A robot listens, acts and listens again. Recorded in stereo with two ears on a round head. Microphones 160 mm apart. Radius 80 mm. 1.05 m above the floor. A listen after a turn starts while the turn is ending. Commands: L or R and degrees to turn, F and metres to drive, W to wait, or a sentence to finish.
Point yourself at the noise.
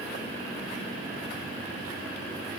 W
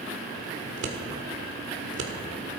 R90
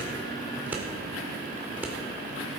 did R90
R10
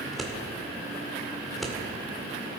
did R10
Found it: scissors, straight ahead, 1 to 2 m away.